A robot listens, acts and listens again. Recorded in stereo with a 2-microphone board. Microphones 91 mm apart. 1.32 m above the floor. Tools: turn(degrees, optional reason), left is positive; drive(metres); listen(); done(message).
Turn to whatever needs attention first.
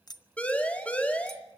turn(degrees=30)
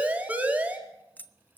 turn(degrees=-15, reason="So it is at 15° right.")
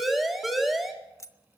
done("Found it: a siren, straight ahead, 2 to 4 m away.")